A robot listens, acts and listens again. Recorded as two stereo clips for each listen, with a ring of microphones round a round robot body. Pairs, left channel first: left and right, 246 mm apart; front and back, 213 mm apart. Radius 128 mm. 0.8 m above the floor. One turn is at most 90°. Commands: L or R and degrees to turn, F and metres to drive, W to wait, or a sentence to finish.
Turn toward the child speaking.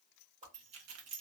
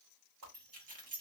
W
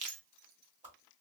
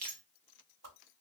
W
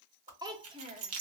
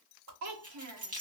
R90
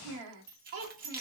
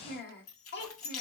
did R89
R45
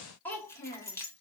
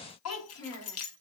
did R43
L15
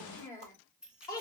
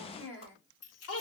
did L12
L10
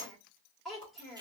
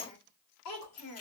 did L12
Facing the child speaking, 1 to 2 m away.